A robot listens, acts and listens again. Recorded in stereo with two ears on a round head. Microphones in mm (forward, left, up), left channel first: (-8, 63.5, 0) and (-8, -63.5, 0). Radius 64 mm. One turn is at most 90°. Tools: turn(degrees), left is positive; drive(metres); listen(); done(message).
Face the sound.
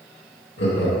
turn(degrees=90)
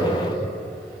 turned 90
done("Facing the laughter.")